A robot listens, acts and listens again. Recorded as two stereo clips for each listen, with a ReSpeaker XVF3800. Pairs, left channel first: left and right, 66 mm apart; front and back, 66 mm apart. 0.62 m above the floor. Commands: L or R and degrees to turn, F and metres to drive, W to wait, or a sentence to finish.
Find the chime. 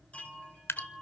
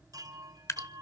L160
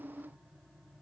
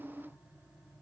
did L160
W
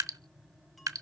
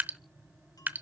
W
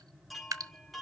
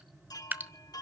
Found it: a chime, straight ahead, 2 to 4 m away.